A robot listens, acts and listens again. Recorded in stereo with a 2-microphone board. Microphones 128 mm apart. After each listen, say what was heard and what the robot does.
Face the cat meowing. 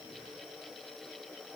Keep listening.
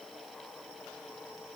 Keep listening.
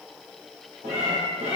The cat meowing: about 60° right or 120° right. Turn 60° right.
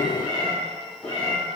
Found it: a cat meowing, straight ahead.